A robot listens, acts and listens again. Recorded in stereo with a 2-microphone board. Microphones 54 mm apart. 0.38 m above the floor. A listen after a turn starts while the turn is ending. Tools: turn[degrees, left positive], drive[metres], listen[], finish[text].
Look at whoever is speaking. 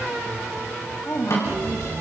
Thought: The woman speaking: about 55° left or 125° left.
Action: turn[55]
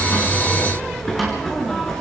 Action: listen[]
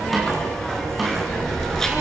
Action: listen[]
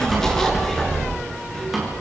Action: finish[I heard a woman speaking, but can't make it out now. It was about straight ahead or 70° left.]